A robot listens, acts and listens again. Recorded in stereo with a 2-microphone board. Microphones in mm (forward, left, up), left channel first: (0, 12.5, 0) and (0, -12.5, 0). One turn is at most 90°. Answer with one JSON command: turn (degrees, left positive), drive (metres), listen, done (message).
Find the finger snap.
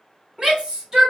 {"listen": true}
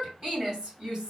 {"listen": true}
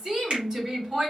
{"turn": -50}
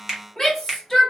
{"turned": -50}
{"turn": -20}
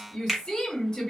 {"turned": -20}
{"done": "Facing the finger snap, 1 to 2 m away."}